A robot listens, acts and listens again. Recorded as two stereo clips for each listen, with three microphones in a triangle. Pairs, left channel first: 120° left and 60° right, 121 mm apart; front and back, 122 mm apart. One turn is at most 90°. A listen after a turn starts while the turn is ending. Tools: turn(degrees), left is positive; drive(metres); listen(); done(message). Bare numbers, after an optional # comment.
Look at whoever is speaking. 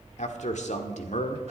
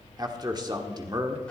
# The man speaking: 125° left.
turn(90)
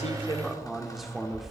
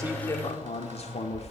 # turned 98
# The man speaking is now 30° left.
turn(30)
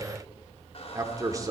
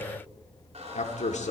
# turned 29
done("Found it: a man speaking, straight ahead.")